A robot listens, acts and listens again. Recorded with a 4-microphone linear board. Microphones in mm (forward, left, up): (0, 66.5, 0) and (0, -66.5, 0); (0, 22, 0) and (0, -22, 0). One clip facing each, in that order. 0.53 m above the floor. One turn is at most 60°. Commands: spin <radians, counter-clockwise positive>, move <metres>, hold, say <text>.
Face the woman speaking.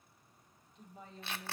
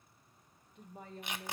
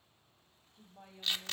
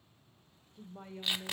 spin -0.96
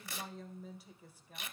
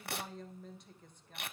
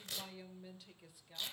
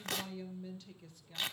spin 0.17
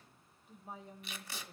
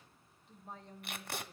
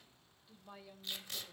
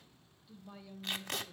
spin 0.17
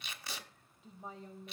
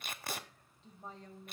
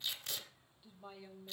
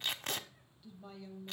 spin 0.17
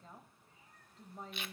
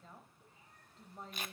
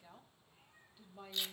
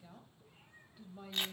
say Facing the woman speaking.